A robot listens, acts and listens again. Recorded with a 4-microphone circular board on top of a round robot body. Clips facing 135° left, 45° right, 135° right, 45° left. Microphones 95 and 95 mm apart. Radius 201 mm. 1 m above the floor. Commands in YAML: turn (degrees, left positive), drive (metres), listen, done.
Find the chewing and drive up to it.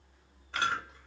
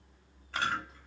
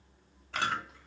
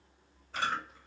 turn: -155
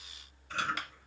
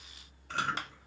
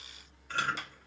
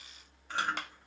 turn: -30
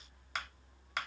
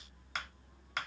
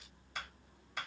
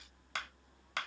listen: true
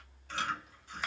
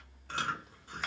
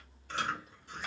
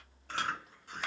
drive: 1.0
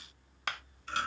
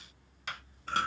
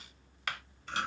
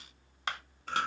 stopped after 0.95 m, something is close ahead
done: "I am next to the chewing."